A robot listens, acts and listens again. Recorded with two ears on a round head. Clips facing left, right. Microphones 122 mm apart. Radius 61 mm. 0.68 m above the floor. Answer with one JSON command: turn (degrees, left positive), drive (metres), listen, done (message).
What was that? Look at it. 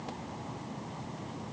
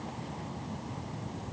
{"listen": true}
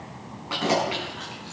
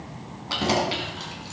{"turn": -35}
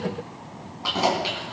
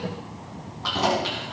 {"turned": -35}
{"turn": 10}
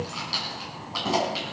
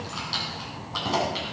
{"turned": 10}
{"done": "Facing the keys jangling."}